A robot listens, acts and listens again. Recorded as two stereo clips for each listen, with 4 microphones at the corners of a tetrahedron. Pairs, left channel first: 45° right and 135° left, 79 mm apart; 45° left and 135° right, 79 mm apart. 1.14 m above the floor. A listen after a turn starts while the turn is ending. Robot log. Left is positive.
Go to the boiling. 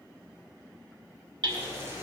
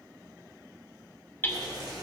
note: The boiling: 165° right.
cmd yaw -165
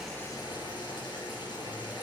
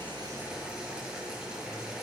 note: The boiling is now 50° right.
cmd yaw -50
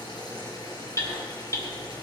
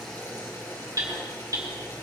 cmd fwd 1.0
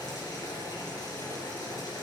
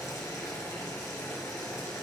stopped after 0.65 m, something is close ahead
end: Blocked. The boiling is further on, straight ahead.